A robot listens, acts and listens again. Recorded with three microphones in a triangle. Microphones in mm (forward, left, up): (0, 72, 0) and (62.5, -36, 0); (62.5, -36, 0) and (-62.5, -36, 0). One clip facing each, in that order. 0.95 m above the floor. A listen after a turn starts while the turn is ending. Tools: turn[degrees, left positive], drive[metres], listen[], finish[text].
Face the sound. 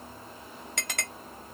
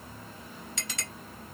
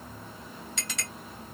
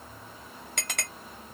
Thought: The clink: 150° left.
Action: turn[150]
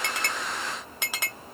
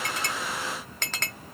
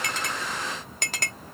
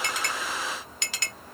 Thought: The clink is now 40° left.
Action: turn[40]
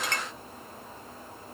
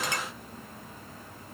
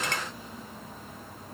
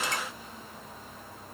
Action: listen[]
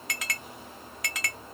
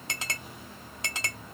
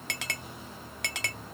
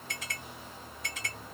Action: finish[Found it: a clink, straight ahead.]